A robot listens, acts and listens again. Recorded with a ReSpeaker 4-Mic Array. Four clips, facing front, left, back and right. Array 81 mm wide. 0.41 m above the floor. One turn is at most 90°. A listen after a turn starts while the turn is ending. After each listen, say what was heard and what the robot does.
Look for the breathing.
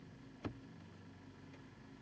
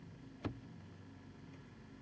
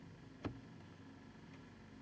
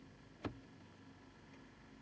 Keep listening.
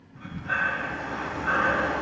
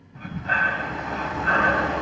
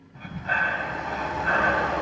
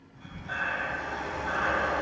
The breathing: 135° left. Turn 90° left.
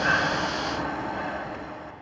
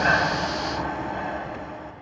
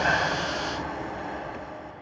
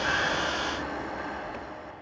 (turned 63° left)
The breathing is now 75° left. Turn 75° left.
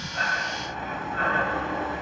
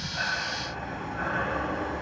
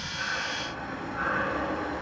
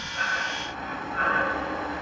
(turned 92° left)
The breathing is now 15° right. Turn 15° right.
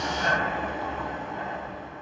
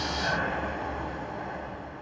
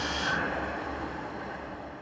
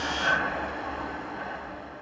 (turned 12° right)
Found it: breathing, straight ahead.